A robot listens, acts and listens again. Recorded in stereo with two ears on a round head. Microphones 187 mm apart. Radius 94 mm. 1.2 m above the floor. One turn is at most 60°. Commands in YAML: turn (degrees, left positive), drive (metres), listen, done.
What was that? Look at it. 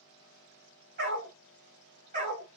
turn: -35
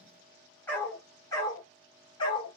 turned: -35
turn: 25
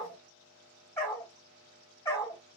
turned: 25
turn: 15
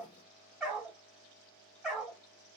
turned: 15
done: "Facing the dog barking."